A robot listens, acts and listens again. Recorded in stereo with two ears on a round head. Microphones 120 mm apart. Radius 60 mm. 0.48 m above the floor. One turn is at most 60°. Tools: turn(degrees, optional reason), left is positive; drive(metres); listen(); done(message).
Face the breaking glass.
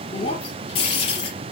turn(degrees=50, reason="The breaking glass: about 50° left or 130° left.")
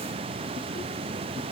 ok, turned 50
listen()
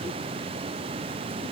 done("I heard breaking glass, but can't make it out now. It was about straight ahead or 80° left.")